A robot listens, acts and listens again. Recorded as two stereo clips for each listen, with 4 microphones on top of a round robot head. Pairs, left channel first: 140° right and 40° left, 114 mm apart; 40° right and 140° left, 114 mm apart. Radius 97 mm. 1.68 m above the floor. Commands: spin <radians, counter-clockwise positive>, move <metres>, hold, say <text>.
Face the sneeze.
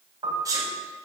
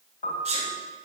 spin 1.83
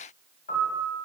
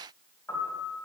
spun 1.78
say Facing where the sneeze came from. I can't hear it now.